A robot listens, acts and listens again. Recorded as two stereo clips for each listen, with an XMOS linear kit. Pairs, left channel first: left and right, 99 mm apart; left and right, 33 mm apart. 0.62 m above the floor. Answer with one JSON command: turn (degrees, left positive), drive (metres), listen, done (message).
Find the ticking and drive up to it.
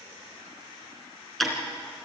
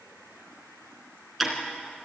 {"turn": 30}
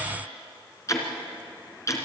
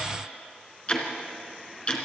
{"turn": 145}
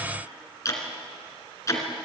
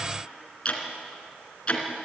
{"turn": 30}
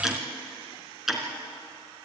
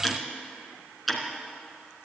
{"drive": 1.0}
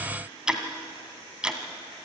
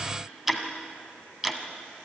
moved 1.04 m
{"turn": -10}
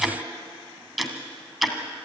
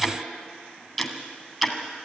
{"drive": 1.0}
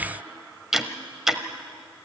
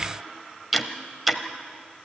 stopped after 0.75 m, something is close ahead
{"done": "I am next to the ticking."}